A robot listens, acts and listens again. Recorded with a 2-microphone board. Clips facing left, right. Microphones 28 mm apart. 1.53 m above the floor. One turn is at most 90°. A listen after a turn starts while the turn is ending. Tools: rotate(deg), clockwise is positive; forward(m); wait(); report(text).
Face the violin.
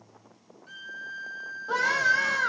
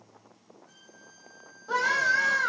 rotate(-75)
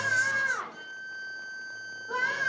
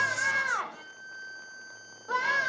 rotate(-15)
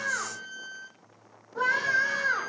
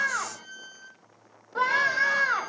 report("Facing the violin.")